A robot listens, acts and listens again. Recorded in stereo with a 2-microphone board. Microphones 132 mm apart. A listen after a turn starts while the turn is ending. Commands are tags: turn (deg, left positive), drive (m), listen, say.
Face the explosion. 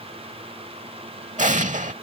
<turn deg="-70"/>
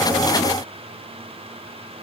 <listen/>
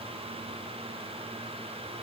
<say>I heard an explosion, but can't make it out now. It was about straight ahead or 40° right.</say>